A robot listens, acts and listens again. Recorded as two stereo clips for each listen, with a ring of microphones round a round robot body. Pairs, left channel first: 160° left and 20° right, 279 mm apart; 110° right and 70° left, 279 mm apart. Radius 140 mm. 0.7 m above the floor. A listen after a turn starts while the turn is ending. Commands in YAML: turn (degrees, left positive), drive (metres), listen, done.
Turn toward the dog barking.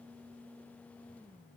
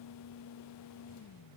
listen: true
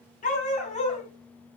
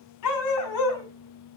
turn: -135
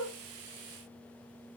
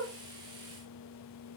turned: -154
turn: 20
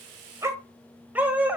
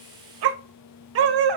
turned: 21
turn: 60
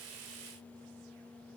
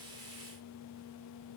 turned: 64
listen: true
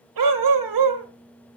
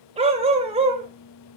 done: "Facing the dog barking, 1 to 2 m away."